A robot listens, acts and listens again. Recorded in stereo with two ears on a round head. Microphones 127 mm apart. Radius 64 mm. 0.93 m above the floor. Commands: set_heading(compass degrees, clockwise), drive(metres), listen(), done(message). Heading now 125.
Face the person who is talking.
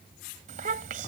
set_heading(190)
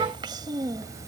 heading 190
set_heading(215)
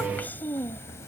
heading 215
set_heading(195)
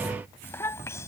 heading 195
set_heading(175)
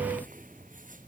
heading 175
listen()
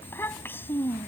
set_heading(160)
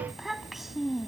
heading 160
done("Found it: a child speaking, straight ahead.")